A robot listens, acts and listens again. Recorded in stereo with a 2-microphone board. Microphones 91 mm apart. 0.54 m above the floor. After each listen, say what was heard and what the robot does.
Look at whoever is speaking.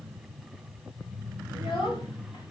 The child speaking: about 65° left or 115° left. Turn 65° left.
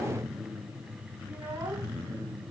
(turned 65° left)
So it is at 30° right. Turn 30° right.
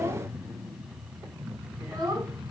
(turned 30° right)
The child speaking is now 40° right. Turn 40° right.
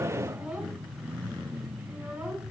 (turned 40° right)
The child speaking is now 10° right. Turn 10° right.
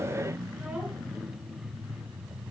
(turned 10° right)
Keep listening.
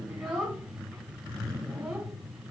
Found it: a child speaking, straight ahead.